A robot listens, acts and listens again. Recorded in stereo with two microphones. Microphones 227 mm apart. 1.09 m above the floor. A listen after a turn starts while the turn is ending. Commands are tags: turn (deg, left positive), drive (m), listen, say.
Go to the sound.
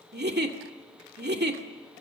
<turn deg="-45"/>
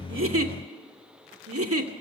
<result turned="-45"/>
<turn deg="-90"/>
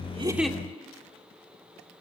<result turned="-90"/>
<listen/>
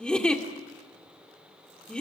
<drive m="1.0"/>
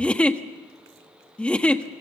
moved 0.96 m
<drive m="1.0"/>
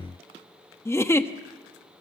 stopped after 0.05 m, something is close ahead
<turn deg="10"/>
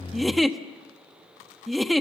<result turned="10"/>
<say>I am next to the giggle.</say>